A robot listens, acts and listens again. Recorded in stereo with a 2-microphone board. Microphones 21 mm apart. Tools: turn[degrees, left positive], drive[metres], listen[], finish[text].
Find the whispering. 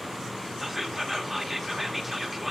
Action: turn[-30]
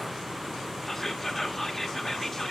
Thought: So it is at 25° left.
Action: turn[25]
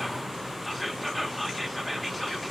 Action: finish[Found it: whispering, straight ahead.]